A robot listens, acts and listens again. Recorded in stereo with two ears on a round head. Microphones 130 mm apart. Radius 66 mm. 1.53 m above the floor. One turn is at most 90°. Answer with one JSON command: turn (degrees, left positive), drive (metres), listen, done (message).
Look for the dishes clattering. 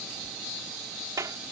{"listen": true}
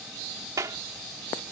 {"listen": true}
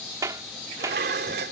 {"turn": -75}
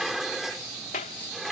{"done": "Facing the dishes clattering."}